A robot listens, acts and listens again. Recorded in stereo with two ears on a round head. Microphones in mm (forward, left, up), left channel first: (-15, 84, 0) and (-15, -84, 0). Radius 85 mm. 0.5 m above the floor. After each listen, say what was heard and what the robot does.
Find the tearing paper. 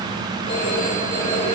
Keep listening.
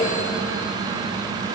Keep listening.
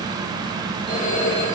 I can't make out tearing paper to turn to.